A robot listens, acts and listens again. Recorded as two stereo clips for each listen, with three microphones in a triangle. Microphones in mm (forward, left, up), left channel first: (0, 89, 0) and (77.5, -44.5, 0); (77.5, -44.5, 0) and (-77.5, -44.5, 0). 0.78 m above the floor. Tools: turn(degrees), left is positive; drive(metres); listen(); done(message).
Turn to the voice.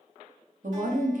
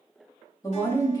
turn(degrees=-65)
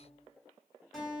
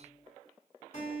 listen()
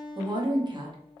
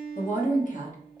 done("Found it: a woman speaking, straight ahead, 1 to 2 m away.")